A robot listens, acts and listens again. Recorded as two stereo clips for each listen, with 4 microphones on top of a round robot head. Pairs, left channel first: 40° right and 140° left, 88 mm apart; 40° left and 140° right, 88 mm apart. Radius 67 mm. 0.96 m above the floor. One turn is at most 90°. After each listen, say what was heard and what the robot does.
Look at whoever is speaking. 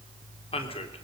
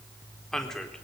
The man speaking: 45° right. Turn 45° right.
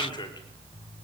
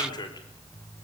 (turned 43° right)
Found it: a man speaking, straight ahead, 2 to 4 m away.